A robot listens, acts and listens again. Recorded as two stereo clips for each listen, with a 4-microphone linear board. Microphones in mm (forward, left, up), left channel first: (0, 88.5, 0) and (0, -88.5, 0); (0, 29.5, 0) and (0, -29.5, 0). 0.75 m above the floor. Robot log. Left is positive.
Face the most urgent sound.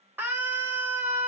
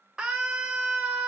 cmd yaw -30
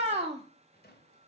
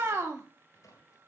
note: So it is at 135° right.
cmd yaw -135
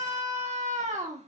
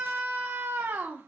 note: The scream is now 50° right.
cmd yaw -50
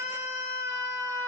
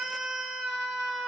note: The scream is now 20° right.
cmd yaw -20
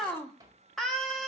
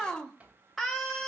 end: Facing the scream.